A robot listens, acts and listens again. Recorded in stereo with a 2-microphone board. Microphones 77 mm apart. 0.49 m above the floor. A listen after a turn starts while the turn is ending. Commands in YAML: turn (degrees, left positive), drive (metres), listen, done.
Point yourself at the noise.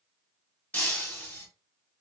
turn: 20
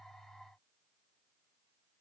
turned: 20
listen: true
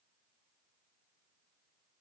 done: "I heard breaking glass, but can't make it out now. It was about straight ahead or 140° left."